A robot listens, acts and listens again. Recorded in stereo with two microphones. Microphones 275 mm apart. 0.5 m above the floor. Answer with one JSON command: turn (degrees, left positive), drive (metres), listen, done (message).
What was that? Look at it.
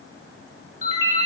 {"turn": 40}
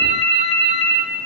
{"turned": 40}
{"done": "Facing the ringtone, 1 to 2 m away."}